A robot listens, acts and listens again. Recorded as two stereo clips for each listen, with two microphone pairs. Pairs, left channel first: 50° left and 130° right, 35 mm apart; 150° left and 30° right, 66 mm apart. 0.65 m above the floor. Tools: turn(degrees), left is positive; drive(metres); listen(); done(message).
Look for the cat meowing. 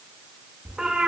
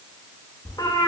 turn(degrees=165)
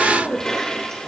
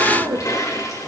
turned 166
turn(degrees=10)
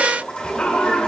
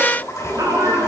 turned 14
done("Facing the cat meowing.")